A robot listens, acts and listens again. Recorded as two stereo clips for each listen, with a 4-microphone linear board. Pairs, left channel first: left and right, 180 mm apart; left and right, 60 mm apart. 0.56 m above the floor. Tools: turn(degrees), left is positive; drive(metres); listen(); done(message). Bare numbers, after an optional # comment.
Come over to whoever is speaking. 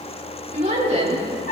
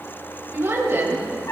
# The woman speaking: about 40° right or 140° right.
turn(-40)
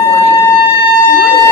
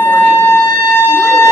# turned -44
listen()
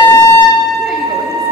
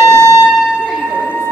listen()
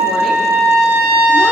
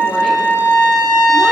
done("I heard a woman speaking, but can't make it out now. It was about 5° left or 95° right. I did not reach it.")